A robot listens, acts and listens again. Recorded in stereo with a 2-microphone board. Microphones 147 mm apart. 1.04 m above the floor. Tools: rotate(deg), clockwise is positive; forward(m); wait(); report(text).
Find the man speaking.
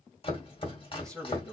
rotate(-30)
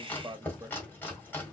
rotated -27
rotate(15)
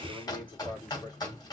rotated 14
rotate(-10)
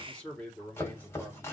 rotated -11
rotate(-10)
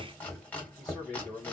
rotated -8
report("Found it: a man speaking, straight ahead.")